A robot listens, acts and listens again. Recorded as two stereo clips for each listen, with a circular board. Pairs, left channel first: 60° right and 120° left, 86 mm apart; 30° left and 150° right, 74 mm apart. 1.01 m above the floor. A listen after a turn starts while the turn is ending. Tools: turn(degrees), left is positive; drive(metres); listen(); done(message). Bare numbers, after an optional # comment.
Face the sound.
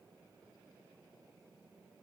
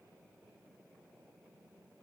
listen()
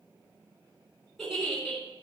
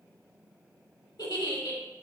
# The giggle: 25° left.
turn(25)
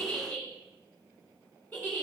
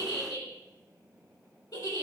# The giggle is now 10° left.
turn(10)
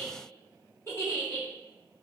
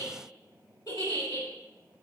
done("Facing the giggle.")